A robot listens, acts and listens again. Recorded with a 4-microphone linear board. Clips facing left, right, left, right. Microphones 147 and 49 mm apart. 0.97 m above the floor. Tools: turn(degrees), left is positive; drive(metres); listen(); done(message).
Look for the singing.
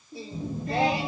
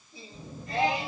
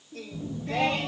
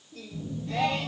turn(degrees=75)
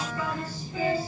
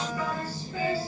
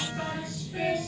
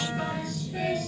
turn(degrees=20)
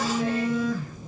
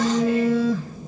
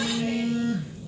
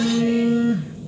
listen()
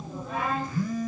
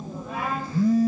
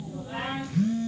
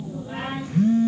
done("Facing the singing, over 4 m away.")